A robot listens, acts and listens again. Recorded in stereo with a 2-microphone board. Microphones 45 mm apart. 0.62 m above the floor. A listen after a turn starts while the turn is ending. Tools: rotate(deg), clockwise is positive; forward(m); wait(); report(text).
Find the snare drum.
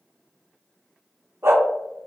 wait()
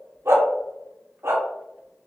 wait()
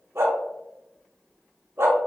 report("I can't make out a snare drum to turn to.")